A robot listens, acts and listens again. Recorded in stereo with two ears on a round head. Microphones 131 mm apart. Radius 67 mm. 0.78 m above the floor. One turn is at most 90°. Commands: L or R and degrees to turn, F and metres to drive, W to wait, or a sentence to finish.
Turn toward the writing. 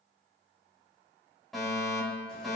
W
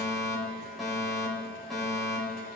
W
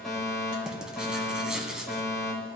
R30
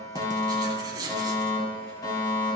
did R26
R90
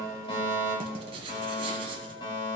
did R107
R40
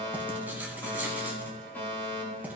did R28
R15
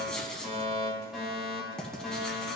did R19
Found it: writing, straight ahead, 1 to 2 m away.